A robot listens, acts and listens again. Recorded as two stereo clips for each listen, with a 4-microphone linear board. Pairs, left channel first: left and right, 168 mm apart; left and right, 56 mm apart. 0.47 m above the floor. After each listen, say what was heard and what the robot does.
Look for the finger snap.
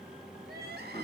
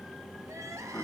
Keep listening.
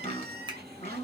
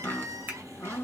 The finger snap: about 25° right or 155° right. Turn 25° right.
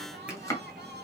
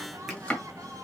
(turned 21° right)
Keep listening.
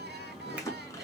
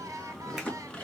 Keep listening.
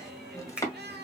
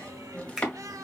So it is at 10° right. Turn 10° right.
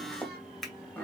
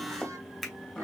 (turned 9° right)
Found it: a finger snap, straight ahead, 2 to 4 m away.